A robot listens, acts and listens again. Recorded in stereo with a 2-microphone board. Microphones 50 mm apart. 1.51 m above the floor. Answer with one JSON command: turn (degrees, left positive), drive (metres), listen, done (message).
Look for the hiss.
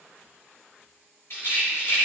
{"listen": true}
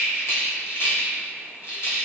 {"listen": true}
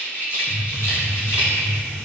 {"turn": 40}
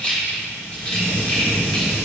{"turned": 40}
{"turn": 100}
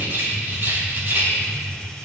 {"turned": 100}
{"turn": 10}
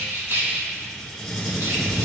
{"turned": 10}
{"done": "Facing the hiss."}